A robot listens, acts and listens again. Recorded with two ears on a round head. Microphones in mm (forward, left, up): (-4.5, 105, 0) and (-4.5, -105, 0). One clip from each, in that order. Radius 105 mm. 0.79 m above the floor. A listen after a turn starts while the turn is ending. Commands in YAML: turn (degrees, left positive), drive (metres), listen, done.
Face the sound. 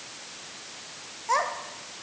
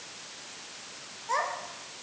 turn: 20
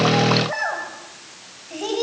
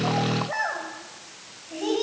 turn: 15
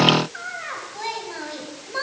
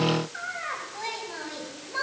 turn: 30
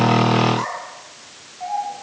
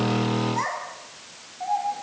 turn: -20
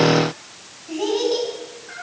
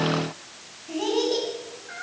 done: "Facing the child speaking."